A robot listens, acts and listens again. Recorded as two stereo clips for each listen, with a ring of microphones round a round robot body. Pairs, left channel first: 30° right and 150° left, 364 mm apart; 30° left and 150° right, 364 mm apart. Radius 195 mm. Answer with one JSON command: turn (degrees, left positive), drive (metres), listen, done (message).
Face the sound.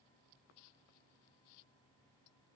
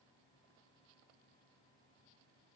{"listen": true}
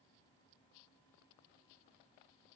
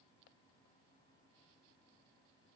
{"listen": true}
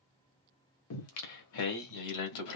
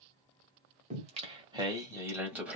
{"turn": -65}
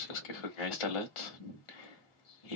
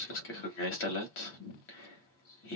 {"turn": -25}
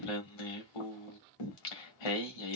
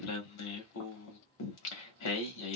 {"turn": -15}
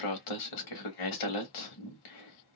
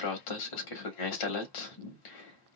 {"done": "Facing the singing."}